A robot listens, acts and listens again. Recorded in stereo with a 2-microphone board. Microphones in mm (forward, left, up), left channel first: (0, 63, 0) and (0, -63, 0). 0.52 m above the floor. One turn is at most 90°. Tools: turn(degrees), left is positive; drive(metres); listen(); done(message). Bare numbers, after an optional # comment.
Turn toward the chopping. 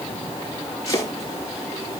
# The chopping: about 25° left or 155° left.
turn(25)
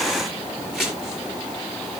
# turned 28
done("Facing the chopping.")